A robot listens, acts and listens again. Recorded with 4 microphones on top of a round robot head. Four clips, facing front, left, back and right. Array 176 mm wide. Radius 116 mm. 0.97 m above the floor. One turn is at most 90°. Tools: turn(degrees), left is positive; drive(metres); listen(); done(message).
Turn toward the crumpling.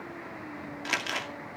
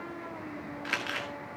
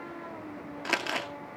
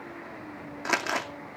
turn(degrees=-90)
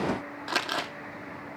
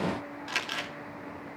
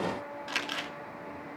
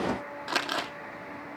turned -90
turn(degrees=-45)
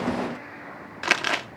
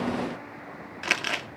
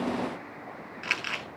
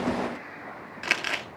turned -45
done("Facing the crumpling, 2 to 4 m away.")